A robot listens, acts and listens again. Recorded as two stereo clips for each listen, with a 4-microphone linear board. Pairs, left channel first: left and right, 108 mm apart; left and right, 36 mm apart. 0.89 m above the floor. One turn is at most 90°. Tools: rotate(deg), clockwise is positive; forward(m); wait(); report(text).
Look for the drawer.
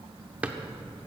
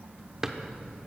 rotate(30)
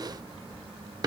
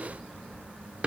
rotate(90)
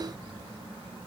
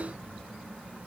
rotate(55)
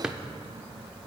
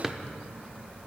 rotate(10)
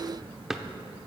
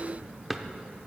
report("Facing the drawer.")